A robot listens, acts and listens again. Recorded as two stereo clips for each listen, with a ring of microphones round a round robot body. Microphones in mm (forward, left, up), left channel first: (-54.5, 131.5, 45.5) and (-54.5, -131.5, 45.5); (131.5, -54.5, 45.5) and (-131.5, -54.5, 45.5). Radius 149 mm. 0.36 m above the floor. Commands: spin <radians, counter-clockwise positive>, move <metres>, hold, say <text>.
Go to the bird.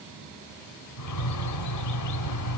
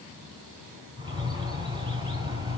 spin 1.83
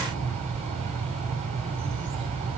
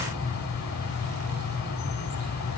spin -0.35
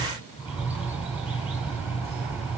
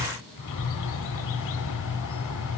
move 1.0
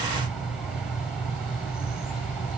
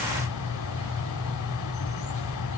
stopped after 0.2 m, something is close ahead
say Blocked. The bird is further on, straight ahead.